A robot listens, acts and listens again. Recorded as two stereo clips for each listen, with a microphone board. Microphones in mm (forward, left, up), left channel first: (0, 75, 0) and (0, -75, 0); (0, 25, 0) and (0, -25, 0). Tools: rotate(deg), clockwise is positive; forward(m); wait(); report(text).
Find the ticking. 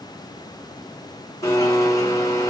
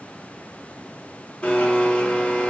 wait()
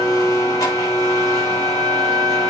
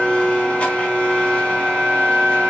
wait()
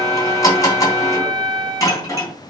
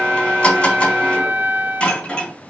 report("I can't make out ticking to turn to.")